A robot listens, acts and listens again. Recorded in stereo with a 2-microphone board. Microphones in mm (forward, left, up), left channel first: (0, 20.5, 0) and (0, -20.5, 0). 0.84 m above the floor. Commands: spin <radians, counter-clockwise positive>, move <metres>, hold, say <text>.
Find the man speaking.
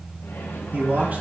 spin -0.70
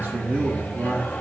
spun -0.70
spin -1.57
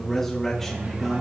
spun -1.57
spin 0.17
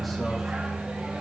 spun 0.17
hold
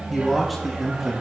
say Found it: a man speaking, straight ahead, 1 to 2 m away.